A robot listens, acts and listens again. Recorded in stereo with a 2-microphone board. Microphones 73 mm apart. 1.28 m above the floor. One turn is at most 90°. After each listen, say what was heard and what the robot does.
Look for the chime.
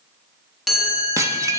Turn 30° left.
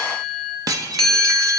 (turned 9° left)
Turn 30° left.
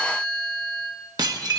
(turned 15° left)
So it is at 155° left. Turn 90° left.
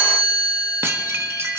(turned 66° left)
The chime is now 85° left. Turn 85° left.
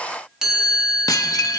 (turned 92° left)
Found it: a chime, straight ahead.